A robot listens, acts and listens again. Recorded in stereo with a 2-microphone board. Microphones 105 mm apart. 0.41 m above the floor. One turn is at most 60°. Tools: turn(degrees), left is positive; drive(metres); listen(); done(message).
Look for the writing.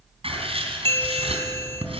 turn(degrees=-60)
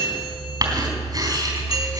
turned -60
turn(degrees=-40)
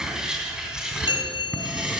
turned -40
done("Found it: writing, straight ahead, 2 to 4 m away.")